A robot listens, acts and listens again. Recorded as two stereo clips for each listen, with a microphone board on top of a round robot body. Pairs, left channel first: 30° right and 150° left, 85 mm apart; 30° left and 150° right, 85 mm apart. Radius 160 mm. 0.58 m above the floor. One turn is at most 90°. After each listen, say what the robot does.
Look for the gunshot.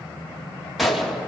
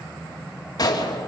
Turn 60° left.
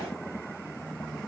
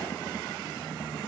Facing where the gunshot came from. I can't hear it now.